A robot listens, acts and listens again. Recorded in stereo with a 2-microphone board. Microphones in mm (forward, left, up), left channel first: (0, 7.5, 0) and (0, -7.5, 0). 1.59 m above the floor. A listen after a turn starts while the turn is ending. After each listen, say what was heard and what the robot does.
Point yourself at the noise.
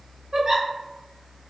The giggle: about 50° right or 130° right. Turn 50° right.
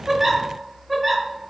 So it is at 15° right. Turn 15° right.
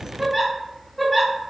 Found it: a giggle, straight ahead.